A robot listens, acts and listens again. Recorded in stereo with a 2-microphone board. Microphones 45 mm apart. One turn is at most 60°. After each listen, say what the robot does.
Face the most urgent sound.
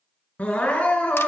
Turn 30° left.
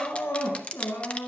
Turn 60° left.
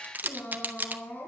Turn 50° left.
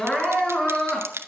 Turn 20° left.
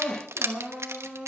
Found it: crying, straight ahead.